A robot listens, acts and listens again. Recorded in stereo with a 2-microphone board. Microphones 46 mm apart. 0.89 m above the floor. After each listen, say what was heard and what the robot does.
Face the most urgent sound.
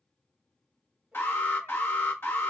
The alarm: about 55° left or 125° left. Turn 55° left.
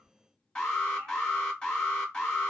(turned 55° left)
So it is at 20° left. Turn 20° left.
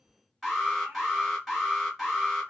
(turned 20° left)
Facing the alarm, 1 to 2 m away.